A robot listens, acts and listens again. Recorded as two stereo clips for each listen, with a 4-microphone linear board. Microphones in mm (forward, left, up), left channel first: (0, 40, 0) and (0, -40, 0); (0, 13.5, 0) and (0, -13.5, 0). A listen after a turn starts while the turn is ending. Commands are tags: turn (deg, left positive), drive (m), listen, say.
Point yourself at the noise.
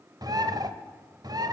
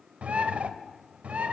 <turn deg="-55"/>
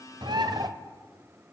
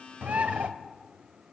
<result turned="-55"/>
<turn deg="-70"/>
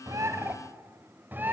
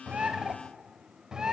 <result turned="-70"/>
<turn deg="-25"/>
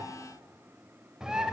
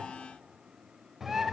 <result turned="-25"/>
<turn deg="-10"/>
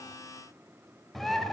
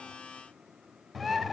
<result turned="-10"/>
<say>Facing the bird.</say>